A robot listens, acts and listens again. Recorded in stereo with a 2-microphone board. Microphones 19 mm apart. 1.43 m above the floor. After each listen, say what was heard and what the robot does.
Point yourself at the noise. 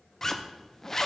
The zipper: about 25° left or 155° left. Turn 25° left.
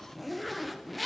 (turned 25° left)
Facing the zipper.